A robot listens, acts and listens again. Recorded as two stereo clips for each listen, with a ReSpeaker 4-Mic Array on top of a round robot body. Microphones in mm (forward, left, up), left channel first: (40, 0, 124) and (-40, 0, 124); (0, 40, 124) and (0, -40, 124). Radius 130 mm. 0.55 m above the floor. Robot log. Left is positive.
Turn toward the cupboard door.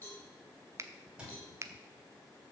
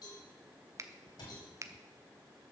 note: The cupboard door: 105° left.
cmd yaw +105
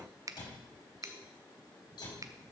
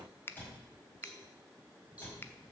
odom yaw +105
note: The cupboard door is now 20° left.
cmd yaw +20
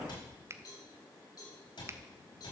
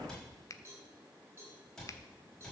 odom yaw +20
end: Found it: a cupboard door, straight ahead, over 4 m away.